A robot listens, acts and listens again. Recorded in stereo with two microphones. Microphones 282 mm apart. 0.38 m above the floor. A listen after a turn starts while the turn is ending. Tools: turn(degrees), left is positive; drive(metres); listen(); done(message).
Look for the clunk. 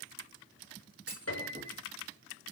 turn(degrees=-35)
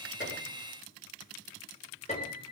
listen()
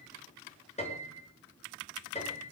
done("I heard a clunk, but can't make it out now. It was about straight ahead or 110° right.")